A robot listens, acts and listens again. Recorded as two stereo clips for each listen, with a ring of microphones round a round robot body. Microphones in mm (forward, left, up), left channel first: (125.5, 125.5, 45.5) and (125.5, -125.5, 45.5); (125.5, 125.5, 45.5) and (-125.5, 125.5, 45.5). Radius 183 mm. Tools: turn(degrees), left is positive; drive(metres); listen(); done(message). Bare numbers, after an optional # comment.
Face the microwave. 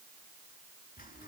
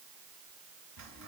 listen()
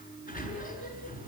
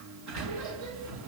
listen()
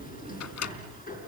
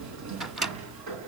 # The microwave: 90° left.
turn(90)
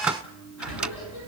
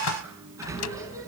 done("Facing the microwave.")